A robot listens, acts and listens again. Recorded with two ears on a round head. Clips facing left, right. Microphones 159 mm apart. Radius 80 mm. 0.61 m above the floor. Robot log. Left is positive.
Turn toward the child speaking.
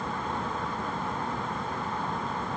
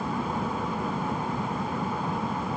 cmd idle
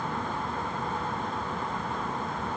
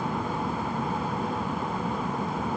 cmd idle
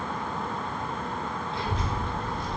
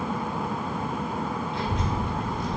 note: The child speaking: about 25° left or 155° left.
cmd yaw +25
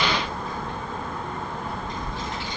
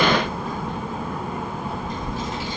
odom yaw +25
end: Facing the child speaking, 2 to 4 m away.